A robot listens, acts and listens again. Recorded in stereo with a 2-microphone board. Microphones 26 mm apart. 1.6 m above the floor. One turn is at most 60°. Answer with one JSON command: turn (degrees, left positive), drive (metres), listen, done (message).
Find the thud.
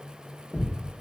{"turn": -20}
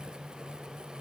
{"listen": true}
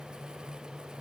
{"done": "I heard a thud, but can't make it out now. It was about straight ahead or 140° right."}